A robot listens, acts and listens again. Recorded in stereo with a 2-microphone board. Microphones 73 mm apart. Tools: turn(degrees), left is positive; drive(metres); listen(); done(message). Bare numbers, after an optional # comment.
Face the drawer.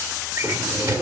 # The drawer: about 50° right or 130° right.
turn(-50)
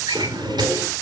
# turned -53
# So it is at 80° right.
turn(-80)
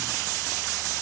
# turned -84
listen()
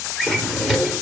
done("Facing the drawer.")